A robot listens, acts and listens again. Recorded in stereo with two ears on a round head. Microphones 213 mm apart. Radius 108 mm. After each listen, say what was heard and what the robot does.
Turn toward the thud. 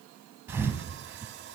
Turn 30° right.
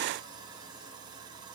Keep listening.
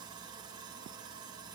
I heard a thud, but can't make it out now. It was about 20° left or 140° right.